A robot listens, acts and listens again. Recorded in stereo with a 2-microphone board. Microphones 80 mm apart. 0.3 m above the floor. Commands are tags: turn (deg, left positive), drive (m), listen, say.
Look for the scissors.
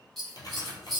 <turn deg="30"/>
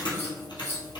<turn deg="145"/>
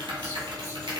<listen/>
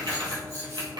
<turn deg="-35"/>
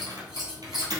<say>Found it: scissors, straight ahead.</say>